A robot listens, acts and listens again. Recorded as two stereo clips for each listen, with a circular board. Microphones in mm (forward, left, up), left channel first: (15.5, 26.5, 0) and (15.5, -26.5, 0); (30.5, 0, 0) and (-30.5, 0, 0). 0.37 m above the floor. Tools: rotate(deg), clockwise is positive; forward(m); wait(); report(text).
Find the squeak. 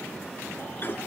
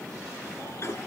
wait()
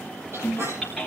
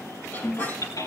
rotate(55)
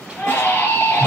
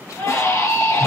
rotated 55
wait()
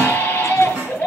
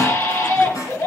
rotate(20)
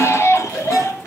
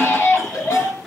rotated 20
wait()
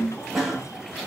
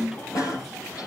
report("Facing the squeak, over 4 m away.")